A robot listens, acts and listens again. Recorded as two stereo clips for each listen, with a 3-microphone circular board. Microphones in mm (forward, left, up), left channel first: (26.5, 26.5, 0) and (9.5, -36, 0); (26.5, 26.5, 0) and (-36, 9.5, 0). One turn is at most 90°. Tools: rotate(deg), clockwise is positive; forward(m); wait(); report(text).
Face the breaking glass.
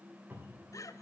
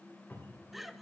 wait()
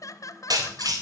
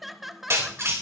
rotate(90)
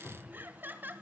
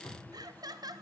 rotate(30)
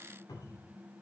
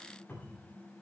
report("I heard breaking glass from this way, but can't make it out now.")